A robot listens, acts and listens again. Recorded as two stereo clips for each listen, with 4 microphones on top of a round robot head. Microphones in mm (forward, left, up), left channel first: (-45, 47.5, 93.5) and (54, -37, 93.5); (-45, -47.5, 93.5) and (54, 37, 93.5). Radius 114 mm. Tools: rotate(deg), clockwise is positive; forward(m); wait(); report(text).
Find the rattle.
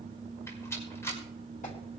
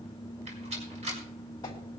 rotate(-70)
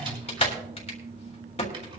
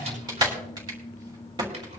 report("Facing the rattle.")